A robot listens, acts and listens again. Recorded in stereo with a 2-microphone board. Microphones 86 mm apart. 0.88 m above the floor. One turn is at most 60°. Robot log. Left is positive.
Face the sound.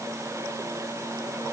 cmd idle
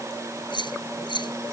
note: The keys jangling: about 75° left or 105° left.
cmd yaw +60
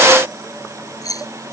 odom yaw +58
note: So it is at 45° left.
cmd yaw +45
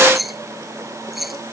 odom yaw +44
end: Facing the keys jangling.